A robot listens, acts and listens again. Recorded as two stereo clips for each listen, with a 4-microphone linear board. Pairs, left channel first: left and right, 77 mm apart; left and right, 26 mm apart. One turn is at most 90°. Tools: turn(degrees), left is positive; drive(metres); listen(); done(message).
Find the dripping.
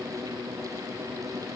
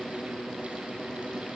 listen()
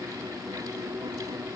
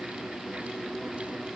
listen()
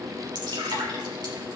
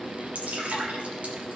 turn(degrees=-90)
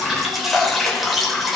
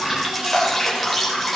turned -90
done("Found it: dripping, straight ahead, 2 to 4 m away.")